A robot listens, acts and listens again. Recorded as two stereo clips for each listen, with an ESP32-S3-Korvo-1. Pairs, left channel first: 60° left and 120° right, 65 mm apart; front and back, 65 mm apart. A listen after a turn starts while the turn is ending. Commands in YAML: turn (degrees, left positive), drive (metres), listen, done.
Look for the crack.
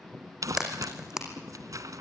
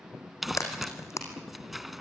turn: -35
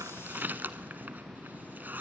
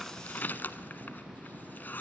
done: "Facing where the crack came from. I can't hear it now."